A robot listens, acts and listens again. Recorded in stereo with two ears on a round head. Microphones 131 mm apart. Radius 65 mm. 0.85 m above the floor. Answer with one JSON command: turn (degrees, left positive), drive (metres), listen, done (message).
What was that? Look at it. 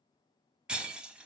{"turn": -30}
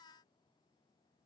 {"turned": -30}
{"listen": true}
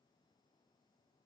{"done": "I heard breaking glass, but can't make it out now. It was about 25° left or 145° right."}